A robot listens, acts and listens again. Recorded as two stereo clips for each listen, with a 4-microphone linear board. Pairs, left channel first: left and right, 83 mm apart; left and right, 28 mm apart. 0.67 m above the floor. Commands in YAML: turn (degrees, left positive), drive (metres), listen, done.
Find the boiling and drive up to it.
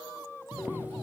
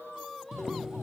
turn: -20
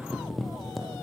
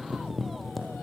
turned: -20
drive: 1.0
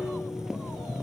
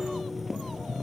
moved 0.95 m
turn: -10
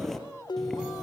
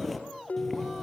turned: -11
drive: 1.0
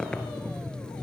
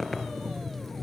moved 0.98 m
turn: 10
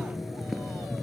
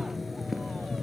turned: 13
drive: 1.0
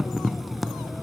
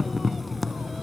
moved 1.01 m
drive: 1.0
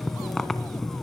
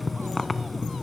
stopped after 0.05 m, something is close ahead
done: "I am next to the boiling."